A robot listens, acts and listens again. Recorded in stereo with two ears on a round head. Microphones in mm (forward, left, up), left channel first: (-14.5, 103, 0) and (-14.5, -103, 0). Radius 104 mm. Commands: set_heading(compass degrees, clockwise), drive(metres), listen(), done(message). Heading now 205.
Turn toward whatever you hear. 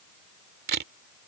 set_heading(250)
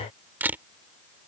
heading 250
set_heading(260)
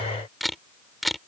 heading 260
done("Found it: a camera shutter, straight ahead.")